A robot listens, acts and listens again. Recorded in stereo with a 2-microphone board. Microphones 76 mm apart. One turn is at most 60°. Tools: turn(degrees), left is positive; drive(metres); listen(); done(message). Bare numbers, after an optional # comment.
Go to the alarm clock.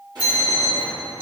# The alarm clock: about 30° right or 150° right.
turn(-30)
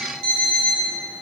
drive(1.0)
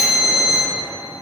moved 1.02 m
drive(1.0)
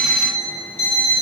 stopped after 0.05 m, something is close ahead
done("I am next to the alarm clock.")